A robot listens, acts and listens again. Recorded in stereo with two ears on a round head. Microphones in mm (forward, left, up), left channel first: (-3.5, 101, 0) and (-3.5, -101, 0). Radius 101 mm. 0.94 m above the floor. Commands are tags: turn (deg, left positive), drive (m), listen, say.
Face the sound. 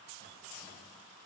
<listen/>
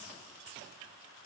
<listen/>
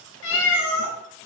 <turn deg="70"/>
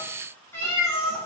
<turn deg="15"/>
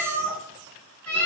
<turn deg="10"/>
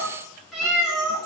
<say>Found it: a cat meowing, straight ahead, over 4 m away.</say>